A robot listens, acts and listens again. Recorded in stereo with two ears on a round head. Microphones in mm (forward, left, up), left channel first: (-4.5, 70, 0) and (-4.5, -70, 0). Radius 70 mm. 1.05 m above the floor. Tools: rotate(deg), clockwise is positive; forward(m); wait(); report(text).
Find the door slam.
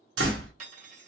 rotate(90)
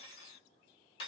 report("Facing where the door slam came from. I can't hear it now.")